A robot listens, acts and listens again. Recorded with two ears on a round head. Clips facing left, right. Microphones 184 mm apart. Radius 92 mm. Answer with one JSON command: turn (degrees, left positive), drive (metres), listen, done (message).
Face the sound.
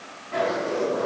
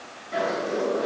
{"turn": -15}
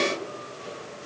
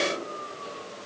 {"listen": true}
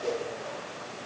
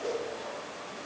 {"done": "Found it: a zipper, straight ahead."}